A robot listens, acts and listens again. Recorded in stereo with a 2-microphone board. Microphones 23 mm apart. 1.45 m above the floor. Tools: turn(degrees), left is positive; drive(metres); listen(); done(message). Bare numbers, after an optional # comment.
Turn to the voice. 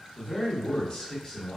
# The man speaking: about 30° left or 150° left.
turn(30)
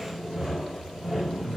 # So it is at 120° left.
turn(120)
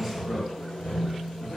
done("Found it: a man speaking, straight ahead, 1 to 2 m away.")